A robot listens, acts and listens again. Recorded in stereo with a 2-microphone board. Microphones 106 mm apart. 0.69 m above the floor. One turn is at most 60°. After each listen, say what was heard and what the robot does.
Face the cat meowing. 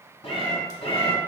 Turn 60° left.
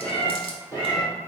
So it is at 40° left. Turn 40° left.
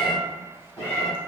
The cat meowing is now 25° left. Turn 25° left.
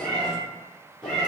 Facing the cat meowing.